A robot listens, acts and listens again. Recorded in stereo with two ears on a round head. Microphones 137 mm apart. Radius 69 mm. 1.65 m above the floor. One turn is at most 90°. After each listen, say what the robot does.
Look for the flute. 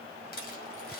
Keep listening.
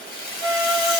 Turn 20° left.
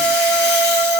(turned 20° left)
Turn 90° left.
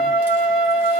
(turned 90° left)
Turn 35° left.
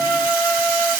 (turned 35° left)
Turn 10° right.
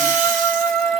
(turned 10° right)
Found it: a flute, straight ahead.